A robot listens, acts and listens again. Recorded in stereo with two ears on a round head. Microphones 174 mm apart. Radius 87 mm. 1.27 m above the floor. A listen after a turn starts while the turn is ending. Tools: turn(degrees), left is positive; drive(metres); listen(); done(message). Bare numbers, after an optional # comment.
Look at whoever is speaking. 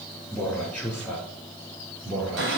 turn(-30)
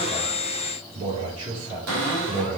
# So it is at 140° right.
turn(-140)
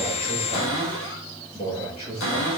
# The man speaking is now 30° left.
turn(30)
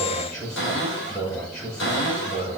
# The man speaking is now 15° left.
turn(15)
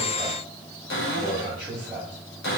done("Found it: a man speaking, straight ahead.")